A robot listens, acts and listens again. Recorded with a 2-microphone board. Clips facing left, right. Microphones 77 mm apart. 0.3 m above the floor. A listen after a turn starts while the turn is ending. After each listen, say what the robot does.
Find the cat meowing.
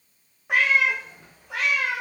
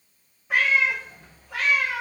Turn 90° left.
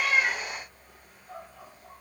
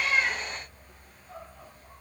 Keep listening.
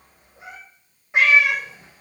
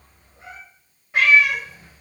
Turn 25° left.
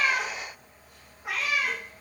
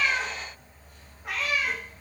Facing the cat meowing, 2 to 4 m away.